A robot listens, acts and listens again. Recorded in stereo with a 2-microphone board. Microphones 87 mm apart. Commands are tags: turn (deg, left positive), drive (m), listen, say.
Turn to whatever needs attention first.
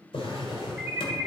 <turn deg="-15"/>
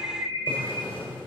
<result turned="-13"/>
<turn deg="-150"/>
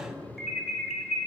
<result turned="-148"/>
<say>Facing the alarm, 1 to 2 m away.</say>